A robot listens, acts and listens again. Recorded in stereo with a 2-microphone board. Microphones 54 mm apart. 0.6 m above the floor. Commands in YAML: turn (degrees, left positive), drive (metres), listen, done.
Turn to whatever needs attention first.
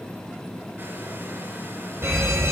turn: -55
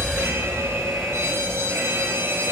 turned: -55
turn: -65
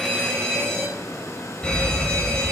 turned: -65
turn: 15
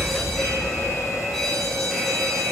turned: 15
done: "Found it: a fire alarm, straight ahead, over 4 m away."